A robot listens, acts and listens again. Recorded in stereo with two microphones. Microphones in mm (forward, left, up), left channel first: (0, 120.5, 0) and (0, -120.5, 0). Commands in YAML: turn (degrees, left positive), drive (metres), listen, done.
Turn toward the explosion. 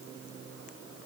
listen: true
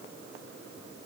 listen: true
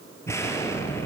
turn: 30
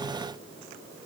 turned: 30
listen: true
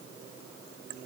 done: "I heard an explosion, but can't make it out now. It was about 20° right or 140° left."